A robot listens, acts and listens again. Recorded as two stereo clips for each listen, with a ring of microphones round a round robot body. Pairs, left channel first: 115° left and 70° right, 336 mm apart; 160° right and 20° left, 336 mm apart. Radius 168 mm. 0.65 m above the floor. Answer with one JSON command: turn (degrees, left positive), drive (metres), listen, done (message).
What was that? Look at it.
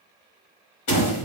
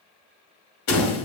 {"turn": 150}
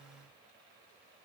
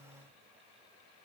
{"done": "I heard a door slam from this way, but can't make it out now."}